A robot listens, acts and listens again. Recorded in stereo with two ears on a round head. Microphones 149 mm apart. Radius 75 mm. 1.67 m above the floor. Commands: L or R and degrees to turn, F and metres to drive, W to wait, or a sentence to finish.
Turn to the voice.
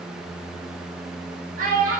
R50
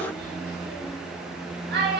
R75
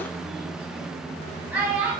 R10
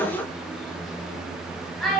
Facing the child speaking.